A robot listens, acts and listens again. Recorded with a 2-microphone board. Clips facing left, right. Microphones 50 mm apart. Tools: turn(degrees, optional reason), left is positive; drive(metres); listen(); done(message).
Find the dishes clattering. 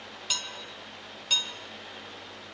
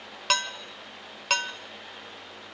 turn(degrees=-90)
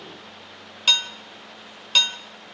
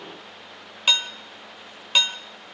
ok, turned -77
turn(degrees=-15, reason="So it is at 15° right.")
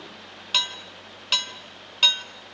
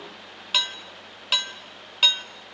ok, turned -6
turn(degrees=-10, reason="The dishes clattering is now 10° right.")
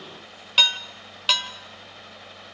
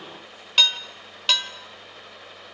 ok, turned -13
done("Facing the dishes clattering, 1 to 2 m away.")